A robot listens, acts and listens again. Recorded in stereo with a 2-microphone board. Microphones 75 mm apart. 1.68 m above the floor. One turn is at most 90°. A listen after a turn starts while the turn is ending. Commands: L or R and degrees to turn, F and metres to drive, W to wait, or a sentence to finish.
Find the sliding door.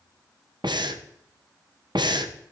W
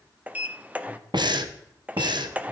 R20
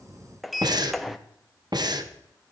Found it: a sliding door, straight ahead.